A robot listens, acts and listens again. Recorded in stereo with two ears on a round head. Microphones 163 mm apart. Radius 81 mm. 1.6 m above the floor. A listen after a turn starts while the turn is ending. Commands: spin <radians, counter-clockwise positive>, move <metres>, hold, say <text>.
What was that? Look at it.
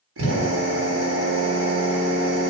spin -1.57
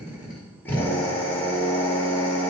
spin 0.17
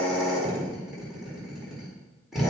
say Facing the drill.